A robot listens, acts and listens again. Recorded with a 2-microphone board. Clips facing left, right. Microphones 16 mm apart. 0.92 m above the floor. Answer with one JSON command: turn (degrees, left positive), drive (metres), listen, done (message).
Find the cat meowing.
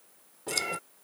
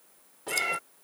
{"turn": -25}
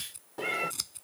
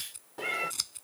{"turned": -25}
{"done": "Found it: a cat meowing, straight ahead."}